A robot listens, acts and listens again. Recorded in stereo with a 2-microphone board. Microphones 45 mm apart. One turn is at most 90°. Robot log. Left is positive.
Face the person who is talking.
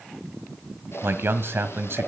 note: The man speaking: about 65° right or 115° right.
cmd yaw -65
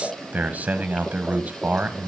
note: So it is at 40° right.
cmd yaw -40
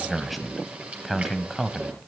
end: Facing the man speaking.